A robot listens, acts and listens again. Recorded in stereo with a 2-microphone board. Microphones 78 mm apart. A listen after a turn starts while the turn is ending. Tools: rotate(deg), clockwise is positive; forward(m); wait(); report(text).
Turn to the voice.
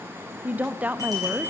rotate(20)
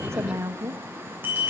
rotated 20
rotate(140)
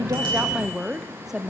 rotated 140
report("Found it: a woman speaking, straight ahead, under 1 m away.")